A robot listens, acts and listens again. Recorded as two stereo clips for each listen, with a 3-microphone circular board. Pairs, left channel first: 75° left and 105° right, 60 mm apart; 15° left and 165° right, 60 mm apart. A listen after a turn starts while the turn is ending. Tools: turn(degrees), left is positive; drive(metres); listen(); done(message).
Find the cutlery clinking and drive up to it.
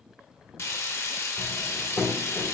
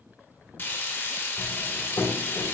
turn(degrees=25)
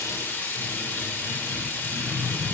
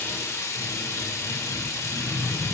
drive(metres=1.0)
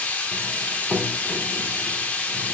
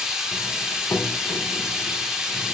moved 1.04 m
drive(metres=1.0)
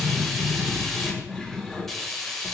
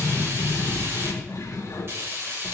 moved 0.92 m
turn(degrees=-10)
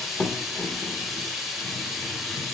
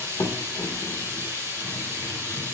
drive(metres=1.0)
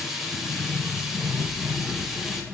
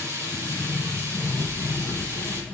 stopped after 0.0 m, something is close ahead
done("Arrived at the cutlery clinking, straight ahead.")